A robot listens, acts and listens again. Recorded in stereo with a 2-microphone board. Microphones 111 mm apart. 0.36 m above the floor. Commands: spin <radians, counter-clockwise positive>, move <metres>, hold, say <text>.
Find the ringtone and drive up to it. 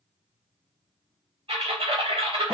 hold
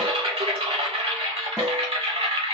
hold
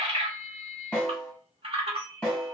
spin -0.61
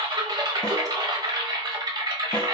hold
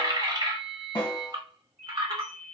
move 1.0
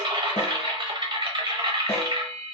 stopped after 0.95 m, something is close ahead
hold
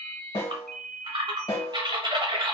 say I am next to the ringtone.